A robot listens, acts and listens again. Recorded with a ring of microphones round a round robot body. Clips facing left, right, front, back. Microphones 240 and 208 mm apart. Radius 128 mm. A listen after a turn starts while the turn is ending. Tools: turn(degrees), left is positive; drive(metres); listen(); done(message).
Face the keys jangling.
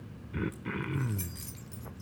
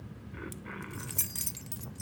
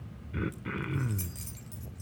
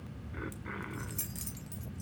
turn(degrees=-100)
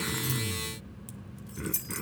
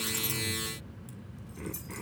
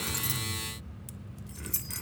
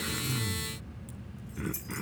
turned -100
turn(degrees=40)
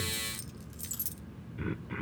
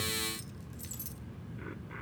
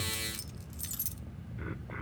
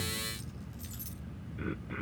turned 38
turn(degrees=25)
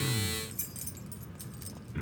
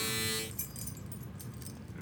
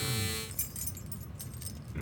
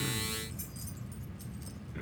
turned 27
turn(degrees=10)
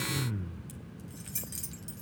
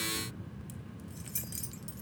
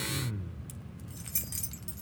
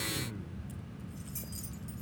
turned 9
done("Found it: keys jangling, straight ahead, 2 to 4 m away.")